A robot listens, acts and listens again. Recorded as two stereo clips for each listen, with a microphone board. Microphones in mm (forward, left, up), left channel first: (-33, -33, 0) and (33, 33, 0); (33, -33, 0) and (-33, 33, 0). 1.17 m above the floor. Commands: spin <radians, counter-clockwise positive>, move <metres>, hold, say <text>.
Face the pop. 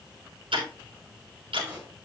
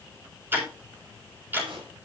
spin 2.01
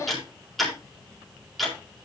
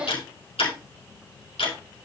say Facing where the pop came from. I can't hear it now.